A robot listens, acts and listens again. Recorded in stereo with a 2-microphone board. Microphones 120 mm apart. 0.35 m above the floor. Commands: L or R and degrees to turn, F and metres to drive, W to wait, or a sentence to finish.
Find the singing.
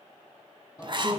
L25
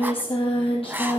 L130
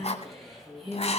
Facing the singing, over 4 m away.